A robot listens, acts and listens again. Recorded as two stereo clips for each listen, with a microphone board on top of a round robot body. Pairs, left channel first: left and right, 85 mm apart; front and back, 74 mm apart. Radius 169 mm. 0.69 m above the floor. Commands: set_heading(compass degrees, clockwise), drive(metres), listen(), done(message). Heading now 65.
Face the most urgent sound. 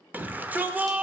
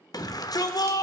set_heading(85)
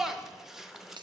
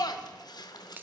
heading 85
done("Facing the shout.")